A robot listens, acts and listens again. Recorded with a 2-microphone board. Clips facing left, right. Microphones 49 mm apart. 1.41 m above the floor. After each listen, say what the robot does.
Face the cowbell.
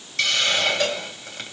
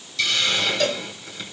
Turn 30° left.
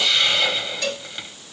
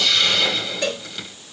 Turn 20° right.
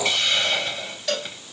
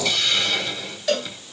Found it: a cowbell, straight ahead.